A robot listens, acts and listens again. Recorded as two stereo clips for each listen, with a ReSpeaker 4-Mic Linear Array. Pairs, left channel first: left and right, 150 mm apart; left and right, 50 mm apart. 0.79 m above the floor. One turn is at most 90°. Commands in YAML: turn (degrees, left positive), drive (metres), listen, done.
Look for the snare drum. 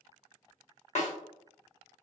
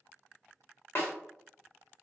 turn: 50
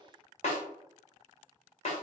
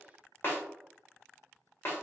turn: 60
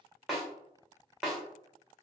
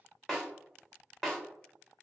done: "Found it: a snare drum, straight ahead, under 1 m away."